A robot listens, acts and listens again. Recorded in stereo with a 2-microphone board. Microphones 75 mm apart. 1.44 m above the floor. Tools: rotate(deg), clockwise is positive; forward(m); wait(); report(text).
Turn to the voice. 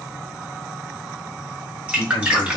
rotate(-70)
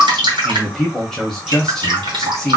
report("Found it: a man speaking, straight ahead.")